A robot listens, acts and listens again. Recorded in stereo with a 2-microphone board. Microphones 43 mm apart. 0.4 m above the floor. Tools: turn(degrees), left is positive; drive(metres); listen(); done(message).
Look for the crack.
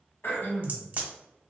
turn(degrees=-40)
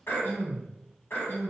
listen()
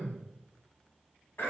done("I heard a crack, but can't make it out now. It was about straight ahead or 100° right.")